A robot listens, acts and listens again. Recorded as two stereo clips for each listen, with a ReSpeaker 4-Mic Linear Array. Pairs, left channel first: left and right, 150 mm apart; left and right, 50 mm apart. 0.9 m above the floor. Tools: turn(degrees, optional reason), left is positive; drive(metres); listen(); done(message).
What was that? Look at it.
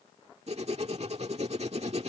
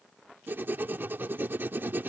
turn(degrees=-45, reason="The writing: about 45° right or 135° right.")
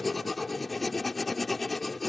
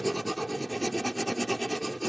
done("Found it: writing, straight ahead.")